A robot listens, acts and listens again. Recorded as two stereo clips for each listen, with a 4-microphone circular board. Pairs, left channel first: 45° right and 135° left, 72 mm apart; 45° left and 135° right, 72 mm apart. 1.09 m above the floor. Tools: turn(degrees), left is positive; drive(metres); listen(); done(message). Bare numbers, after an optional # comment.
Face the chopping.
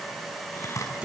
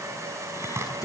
# The chopping: 85° right.
turn(-85)
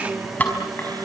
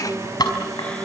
# The chopping is now 25° left.
turn(25)
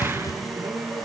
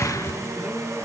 # The chopping is now 10° right.
turn(-10)
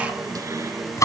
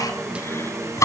done("Facing the chopping.")